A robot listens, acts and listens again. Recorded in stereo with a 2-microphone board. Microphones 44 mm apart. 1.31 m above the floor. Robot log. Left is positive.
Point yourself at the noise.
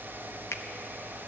note: The finger snap: about 75° left or 105° left.
cmd yaw +75
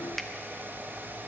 cmd idle
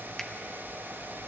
cmd idle
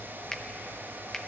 end: I heard a finger snap, but can't make it out now. It was about straight ahead or 30° left.